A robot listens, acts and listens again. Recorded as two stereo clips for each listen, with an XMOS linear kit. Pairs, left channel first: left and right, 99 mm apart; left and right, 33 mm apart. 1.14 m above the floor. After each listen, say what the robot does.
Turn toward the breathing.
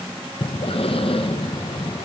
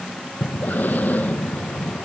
Turn 70° left.
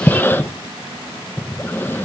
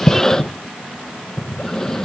Turn 25° left.
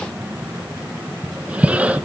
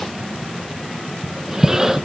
Turn 15° right.
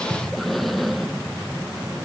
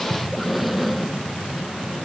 Found it: breathing, straight ahead, under 1 m away.